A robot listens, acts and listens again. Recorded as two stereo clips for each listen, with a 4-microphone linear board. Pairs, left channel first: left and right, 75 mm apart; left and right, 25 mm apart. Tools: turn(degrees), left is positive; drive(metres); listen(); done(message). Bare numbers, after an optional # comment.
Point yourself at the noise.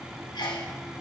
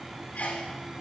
turn(90)
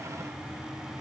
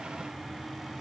done("Facing where the sneeze came from. I can't hear it now.")